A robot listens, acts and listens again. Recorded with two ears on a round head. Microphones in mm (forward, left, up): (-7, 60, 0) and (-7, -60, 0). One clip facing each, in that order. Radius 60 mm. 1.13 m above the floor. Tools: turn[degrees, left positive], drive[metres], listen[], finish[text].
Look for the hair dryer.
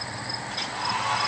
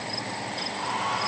Action: listen[]
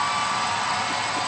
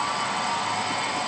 Action: turn[90]
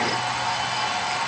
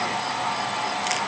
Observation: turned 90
Action: finish[Found it: a hair dryer, straight ahead.]